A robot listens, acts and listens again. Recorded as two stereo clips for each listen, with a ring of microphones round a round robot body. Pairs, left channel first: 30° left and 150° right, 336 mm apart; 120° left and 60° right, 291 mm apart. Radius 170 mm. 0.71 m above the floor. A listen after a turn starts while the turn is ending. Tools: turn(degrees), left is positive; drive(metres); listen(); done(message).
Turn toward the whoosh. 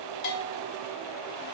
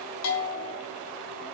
listen()
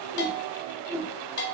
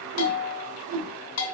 turn(degrees=-70)
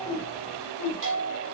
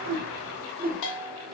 done("Found it: a whoosh, straight ahead, 1 to 2 m away.")